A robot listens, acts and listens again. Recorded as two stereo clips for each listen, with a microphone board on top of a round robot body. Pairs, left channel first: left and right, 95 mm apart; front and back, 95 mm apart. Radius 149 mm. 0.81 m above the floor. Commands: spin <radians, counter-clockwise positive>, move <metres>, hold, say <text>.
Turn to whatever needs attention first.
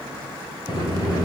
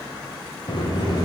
hold
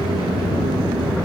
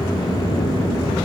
hold
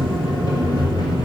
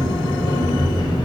say I can't make out anything urgent to turn to.